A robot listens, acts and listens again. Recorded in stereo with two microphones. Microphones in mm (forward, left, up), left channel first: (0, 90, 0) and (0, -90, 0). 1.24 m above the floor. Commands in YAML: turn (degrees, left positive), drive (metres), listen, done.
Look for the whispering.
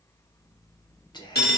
turn: 25
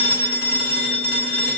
listen: true
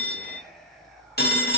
done: "Facing the whispering, under 1 m away."